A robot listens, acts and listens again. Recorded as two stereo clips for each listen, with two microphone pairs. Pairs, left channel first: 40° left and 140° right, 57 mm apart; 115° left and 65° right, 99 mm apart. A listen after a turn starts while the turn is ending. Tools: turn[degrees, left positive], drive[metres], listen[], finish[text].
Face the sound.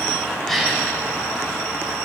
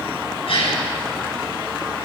Thought: The gasp: 125° left.
Action: turn[125]
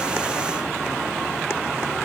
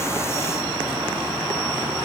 Action: finish[Facing where the gasp came from. I can't hear it now.]